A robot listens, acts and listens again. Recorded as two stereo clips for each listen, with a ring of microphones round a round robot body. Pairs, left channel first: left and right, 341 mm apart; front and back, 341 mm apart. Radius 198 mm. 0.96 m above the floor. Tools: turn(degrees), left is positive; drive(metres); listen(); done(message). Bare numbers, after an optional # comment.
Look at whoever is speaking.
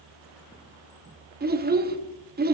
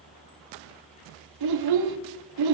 # The child speaking: 155° right.
turn(-155)
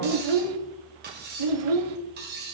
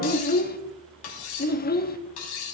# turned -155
# The child speaking is now 65° right.
turn(-65)
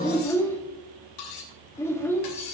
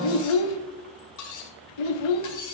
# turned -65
done("Facing the child speaking, 1 to 2 m away.")